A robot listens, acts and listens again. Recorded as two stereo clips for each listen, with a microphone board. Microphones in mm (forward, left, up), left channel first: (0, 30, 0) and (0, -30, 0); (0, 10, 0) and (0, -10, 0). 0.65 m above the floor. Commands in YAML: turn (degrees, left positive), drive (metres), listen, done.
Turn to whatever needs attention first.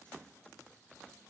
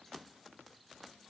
listen: true
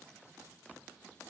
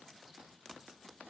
listen: true
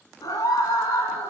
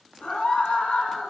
turn: 90
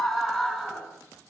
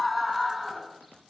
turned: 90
turn: 10
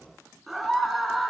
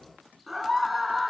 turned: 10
done: "Facing the scream."